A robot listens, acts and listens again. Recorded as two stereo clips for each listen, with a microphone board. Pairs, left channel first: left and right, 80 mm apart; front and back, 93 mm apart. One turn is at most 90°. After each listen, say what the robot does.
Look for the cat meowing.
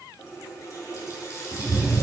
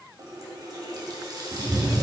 Turn 90° left.
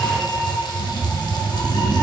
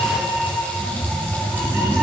Turn 90° left.
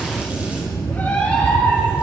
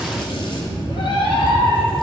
Turn 25° left.
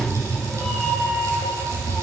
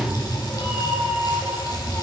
Found it: a cat meowing, straight ahead.